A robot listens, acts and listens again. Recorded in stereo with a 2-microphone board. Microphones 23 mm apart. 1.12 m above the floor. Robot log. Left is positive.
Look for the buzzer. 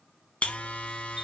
note: The buzzer: about 60° left or 120° left.
cmd yaw +60
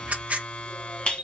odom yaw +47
note: So it is at 50° left.
cmd yaw +50
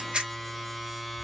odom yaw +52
end: Facing the buzzer.